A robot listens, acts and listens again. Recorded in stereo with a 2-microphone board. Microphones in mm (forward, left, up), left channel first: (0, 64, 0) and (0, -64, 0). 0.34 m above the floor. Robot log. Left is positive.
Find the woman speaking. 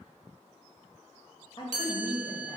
note: The woman speaking: about 40° left or 140° left.
cmd yaw +40
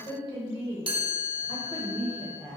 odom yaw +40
note: The woman speaking: about 45° left or 135° left.
cmd yaw +45
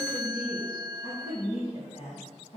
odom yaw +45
note: So it is at 70° left.
cmd yaw +70
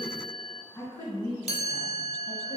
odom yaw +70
note: The woman speaking is now 25° left.
cmd yaw +25
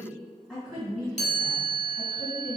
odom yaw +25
end: Found it: a woman speaking, straight ahead.